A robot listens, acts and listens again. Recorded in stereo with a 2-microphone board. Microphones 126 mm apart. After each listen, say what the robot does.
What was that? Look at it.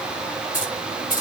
Turn 90° left.
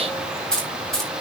Found it: keys jangling, straight ahead, over 4 m away.